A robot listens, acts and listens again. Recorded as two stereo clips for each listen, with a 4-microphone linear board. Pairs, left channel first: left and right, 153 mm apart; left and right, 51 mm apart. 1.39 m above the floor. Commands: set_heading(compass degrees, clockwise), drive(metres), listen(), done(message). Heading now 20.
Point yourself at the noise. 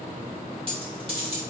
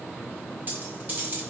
set_heading(60)
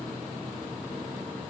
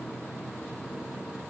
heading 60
listen()
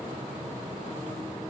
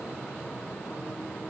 done("I heard a dropped coin, but can't make it out now. It was about straight ahead or 100° right.")